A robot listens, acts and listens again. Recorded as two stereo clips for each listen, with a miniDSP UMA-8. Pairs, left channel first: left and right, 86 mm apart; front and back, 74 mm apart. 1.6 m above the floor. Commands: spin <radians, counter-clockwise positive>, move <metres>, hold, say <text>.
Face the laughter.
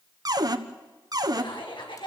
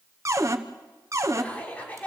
spin 1.22
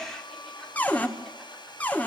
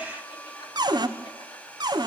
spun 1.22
hold
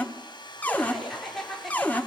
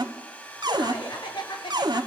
say Facing the laughter.